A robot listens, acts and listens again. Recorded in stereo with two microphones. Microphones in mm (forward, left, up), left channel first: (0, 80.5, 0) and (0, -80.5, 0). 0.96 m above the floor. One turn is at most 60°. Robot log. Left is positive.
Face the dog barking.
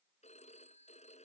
cmd idle
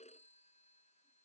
cmd idle
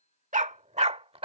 note: The dog barking: about 35° right or 145° right.
cmd yaw -35
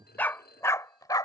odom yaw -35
note: So it is at 25° left.
cmd yaw +25
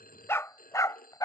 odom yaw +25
note: The dog barking is now 25° left.
cmd yaw +25
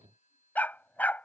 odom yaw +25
note: The dog barking is now 10° left.
cmd yaw +10
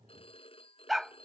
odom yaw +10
end: Found it: a dog barking, straight ahead.